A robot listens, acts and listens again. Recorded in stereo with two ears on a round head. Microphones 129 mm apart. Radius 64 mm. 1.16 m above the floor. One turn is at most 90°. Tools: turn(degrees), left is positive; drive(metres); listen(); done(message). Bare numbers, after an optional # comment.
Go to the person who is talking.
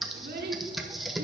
# The child speaking: about 75° right or 105° right.
turn(-75)
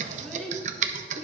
drive(1.0)
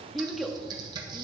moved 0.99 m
drive(1.0)
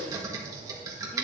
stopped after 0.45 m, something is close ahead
listen()
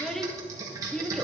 done("I am next to the child speaking.")